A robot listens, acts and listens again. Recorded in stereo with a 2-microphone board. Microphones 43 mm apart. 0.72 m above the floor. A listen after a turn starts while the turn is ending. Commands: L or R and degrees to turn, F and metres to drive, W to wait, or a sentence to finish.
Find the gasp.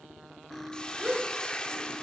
R15
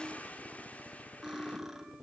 W
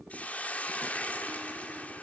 I heard a gasp, but can't make it out now. It was about straight ahead or 150° right.